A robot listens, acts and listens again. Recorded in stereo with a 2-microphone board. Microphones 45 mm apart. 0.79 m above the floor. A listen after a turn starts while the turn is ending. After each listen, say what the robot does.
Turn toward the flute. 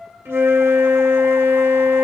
Turn 90° right.
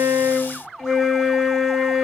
Facing the flute.